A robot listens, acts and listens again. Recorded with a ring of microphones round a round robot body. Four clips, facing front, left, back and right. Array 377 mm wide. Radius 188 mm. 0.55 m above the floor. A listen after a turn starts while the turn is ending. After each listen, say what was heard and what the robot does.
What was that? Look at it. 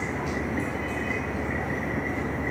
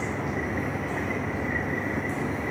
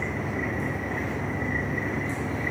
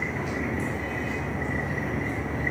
Keep listening.
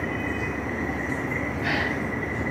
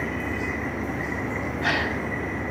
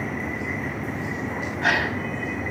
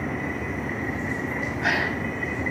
The gasp: 160° right. Turn 160° right.
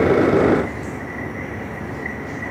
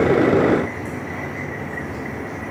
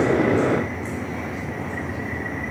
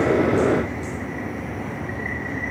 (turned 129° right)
Nothing new. It was at 30° right. Turn 30° right.
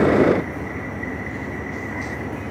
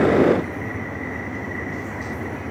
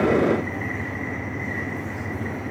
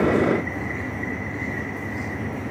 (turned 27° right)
Facing where the gasp came from. I can't hear it now.